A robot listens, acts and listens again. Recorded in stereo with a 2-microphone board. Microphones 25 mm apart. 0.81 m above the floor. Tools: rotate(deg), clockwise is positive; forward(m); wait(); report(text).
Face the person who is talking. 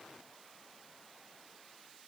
wait()
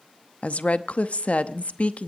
rotate(-60)
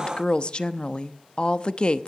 rotate(-45)
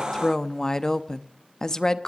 rotate(-25)
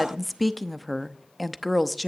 report("Facing the woman speaking.")